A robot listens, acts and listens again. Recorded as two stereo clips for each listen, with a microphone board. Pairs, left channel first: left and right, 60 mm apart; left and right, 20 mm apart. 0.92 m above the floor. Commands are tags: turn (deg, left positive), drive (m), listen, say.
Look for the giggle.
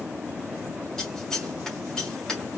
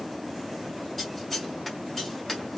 <listen/>
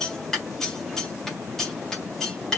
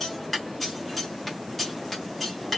<listen/>
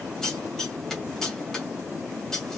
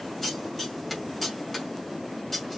<say>I can't make out a giggle to turn to.</say>